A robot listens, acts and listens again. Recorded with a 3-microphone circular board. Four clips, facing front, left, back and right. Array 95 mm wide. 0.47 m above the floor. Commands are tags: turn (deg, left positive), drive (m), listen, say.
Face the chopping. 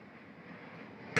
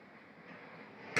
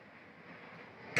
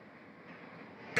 <listen/>
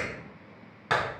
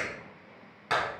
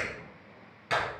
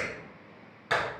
<listen/>
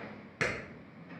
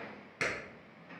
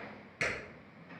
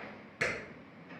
<say>I can't make out chopping, only a clap.</say>